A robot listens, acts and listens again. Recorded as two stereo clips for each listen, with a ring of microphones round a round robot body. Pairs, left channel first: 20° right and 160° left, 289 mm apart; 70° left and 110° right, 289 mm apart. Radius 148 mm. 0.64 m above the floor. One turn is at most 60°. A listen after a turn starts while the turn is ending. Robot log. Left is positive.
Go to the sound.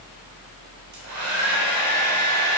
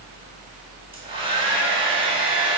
note: The hair dryer: 175° left.
cmd yaw +60
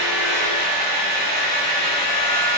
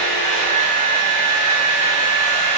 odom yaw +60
note: The hair dryer is now 100° left.
cmd yaw +60
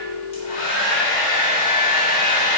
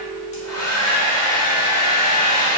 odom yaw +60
note: The hair dryer is now 35° left.
cmd yaw +35
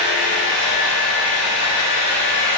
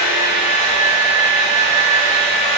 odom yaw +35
cmd fwd 1.0
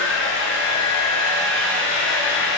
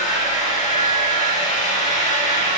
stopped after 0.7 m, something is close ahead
note: The hair dryer is now 10° left.
cmd yaw +10
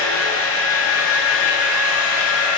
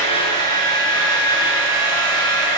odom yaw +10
end: I am next to the hair dryer.